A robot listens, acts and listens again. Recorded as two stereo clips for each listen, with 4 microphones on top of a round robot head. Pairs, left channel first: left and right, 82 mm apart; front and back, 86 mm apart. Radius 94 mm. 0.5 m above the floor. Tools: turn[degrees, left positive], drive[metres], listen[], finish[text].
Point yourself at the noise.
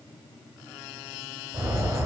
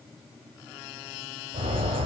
Thought: The bird: 155° right.
Action: turn[-155]
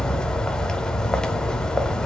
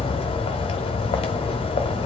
Thought: The bird is now 10° left.
Action: turn[10]
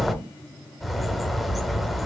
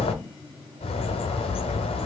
Action: finish[Facing the bird, under 1 m away.]